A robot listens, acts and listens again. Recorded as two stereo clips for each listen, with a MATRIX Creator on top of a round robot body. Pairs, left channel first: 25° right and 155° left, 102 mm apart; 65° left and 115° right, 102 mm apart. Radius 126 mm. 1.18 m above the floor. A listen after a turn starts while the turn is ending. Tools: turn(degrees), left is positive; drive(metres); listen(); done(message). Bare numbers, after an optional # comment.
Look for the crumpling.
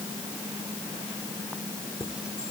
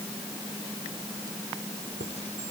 listen()
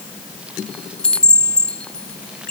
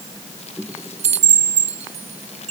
listen()
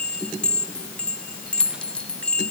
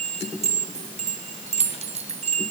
done("I can't make out crumpling, only a chime.")